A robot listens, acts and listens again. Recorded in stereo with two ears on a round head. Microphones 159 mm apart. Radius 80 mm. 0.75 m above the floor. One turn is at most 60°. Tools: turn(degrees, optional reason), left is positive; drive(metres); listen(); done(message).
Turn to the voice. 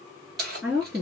turn(degrees=-30)
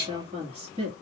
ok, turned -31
turn(degrees=-60, reason="So it is at 130° right.")
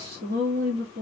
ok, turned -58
turn(degrees=-60, reason="The woman speaking is now 75° right.")
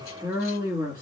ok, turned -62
turn(degrees=-10, reason="The woman speaking is now 10° right.")
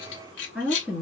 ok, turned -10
done("Found it: a woman speaking, straight ahead, 1 to 2 m away.")